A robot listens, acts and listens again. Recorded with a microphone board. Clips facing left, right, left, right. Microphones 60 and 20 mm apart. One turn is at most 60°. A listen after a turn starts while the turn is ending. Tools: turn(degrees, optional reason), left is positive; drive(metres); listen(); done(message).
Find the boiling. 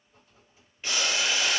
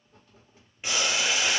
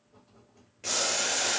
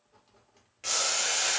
turn(degrees=-30)
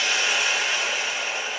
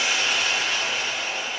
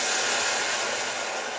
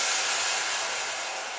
turn(degrees=15, reason="So it is at 15° left.")
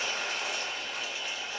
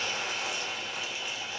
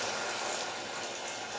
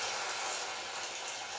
done("Facing the boiling.")